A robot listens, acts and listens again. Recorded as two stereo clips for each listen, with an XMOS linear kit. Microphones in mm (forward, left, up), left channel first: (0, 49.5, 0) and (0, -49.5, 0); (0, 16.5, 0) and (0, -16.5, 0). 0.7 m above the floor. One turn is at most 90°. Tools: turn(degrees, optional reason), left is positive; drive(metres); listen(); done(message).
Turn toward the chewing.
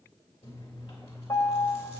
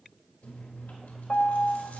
turn(degrees=75, reason="The chewing: about 75° left or 105° left.")
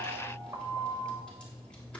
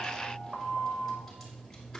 turn(degrees=10, reason="So it is at 10° left.")
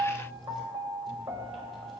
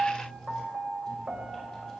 done("Facing the chewing.")